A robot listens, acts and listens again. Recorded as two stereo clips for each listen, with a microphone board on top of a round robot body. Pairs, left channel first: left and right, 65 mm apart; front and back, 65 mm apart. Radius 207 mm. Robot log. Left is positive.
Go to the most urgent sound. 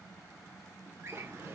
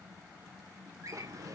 cmd idle
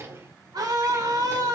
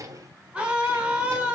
note: The scream: 110° right.
cmd yaw -110
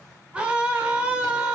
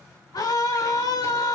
note: The scream is now 15° right.
cmd yaw -15
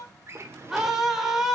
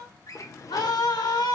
cmd fwd 1.0
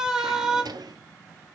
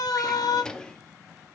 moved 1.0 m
note: The scream is now 10° right.
cmd yaw -10
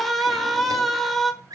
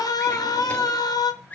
cmd fwd 1.0
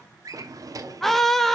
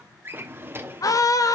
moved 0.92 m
cmd fwd 1.0
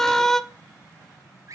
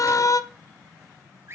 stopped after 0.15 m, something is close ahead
end: I am next to the scream.